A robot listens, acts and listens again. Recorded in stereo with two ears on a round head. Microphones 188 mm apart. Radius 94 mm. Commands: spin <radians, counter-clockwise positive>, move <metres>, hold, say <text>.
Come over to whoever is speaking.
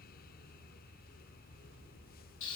hold
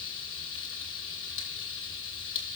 hold
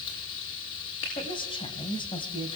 spin 0.44
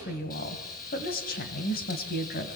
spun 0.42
spin 2.27
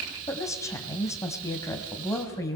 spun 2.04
spin 0.26
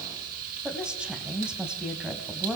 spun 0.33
move 1.0
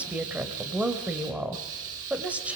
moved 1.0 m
move 1.0
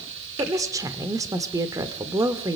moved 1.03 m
spin -0.35
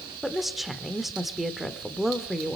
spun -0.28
move 1.0
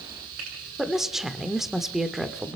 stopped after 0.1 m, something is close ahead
say I am next to the woman speaking.